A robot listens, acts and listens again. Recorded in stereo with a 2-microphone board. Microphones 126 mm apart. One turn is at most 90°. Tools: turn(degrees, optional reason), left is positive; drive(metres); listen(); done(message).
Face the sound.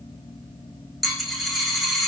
turn(degrees=30)
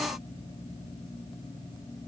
listen()
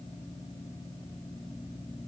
done("I heard a dropped coin, but can't make it out now. It was about 30° right or 150° left.")